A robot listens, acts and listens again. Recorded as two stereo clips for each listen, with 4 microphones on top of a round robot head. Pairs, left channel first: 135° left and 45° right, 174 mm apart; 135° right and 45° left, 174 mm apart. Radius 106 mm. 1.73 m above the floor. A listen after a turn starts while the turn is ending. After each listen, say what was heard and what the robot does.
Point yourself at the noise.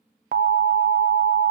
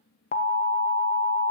The alarm: 85° right. Turn 85° right.
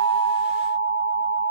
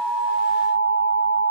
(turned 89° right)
Facing the alarm, 1 to 2 m away.